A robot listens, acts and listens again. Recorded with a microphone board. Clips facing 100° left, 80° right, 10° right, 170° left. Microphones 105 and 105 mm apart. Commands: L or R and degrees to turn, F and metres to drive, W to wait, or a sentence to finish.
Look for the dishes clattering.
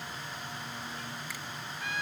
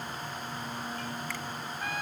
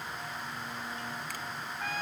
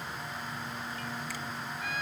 W
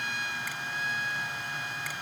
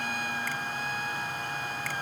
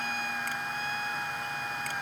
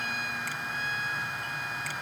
W
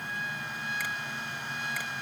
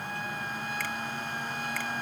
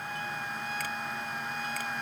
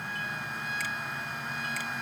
I can't make out dishes clattering to turn to.